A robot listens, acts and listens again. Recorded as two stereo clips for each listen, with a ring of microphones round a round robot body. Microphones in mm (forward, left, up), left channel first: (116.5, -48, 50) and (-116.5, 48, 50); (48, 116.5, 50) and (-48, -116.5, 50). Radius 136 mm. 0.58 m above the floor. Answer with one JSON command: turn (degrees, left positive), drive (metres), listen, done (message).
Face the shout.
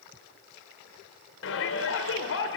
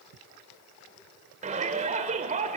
{"turn": -55}
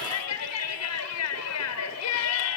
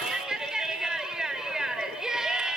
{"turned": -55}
{"turn": -25}
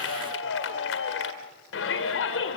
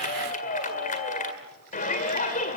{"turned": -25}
{"turn": 10}
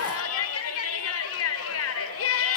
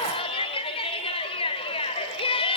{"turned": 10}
{"done": "Found it: a shout, straight ahead."}